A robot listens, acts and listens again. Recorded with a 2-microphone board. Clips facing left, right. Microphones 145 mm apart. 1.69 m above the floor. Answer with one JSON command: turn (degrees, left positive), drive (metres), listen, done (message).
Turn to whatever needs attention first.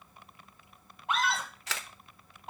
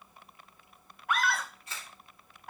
{"turn": 25}
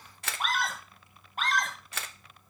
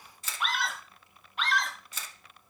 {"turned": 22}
{"turn": 135}
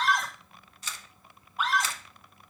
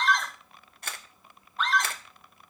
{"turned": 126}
{"done": "Found it: a scream, straight ahead, 1 to 2 m away."}